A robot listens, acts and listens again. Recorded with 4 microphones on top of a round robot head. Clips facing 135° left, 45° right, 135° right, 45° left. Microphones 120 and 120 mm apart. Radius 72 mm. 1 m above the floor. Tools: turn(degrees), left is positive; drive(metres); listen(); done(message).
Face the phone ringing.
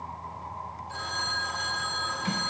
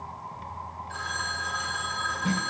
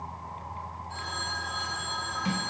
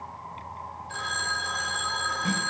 turn(degrees=65)
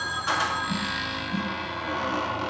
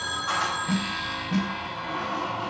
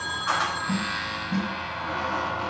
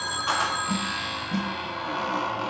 turn(degrees=35)
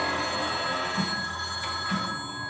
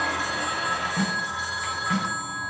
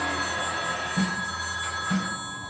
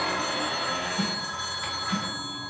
turn(degrees=-10)
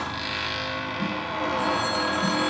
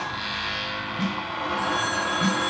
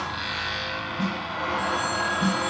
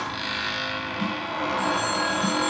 listen()
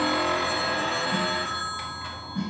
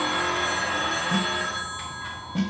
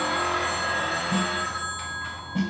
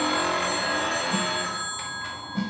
done("Facing the phone ringing, 2 to 4 m away.")